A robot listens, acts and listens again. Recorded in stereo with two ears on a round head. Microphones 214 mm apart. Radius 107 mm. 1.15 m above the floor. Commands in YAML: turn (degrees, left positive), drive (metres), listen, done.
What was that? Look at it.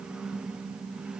listen: true
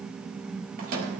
turn: -35
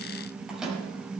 done: "Facing the microwave, over 4 m away."